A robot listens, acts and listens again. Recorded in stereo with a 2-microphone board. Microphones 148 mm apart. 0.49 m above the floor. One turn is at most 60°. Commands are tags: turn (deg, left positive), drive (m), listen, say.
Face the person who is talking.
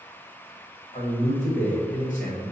<turn deg="60"/>
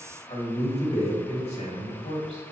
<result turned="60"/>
<turn deg="50"/>
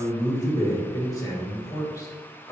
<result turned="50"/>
<turn deg="25"/>
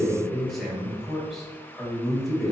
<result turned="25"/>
<say>Facing the man speaking, 1 to 2 m away.</say>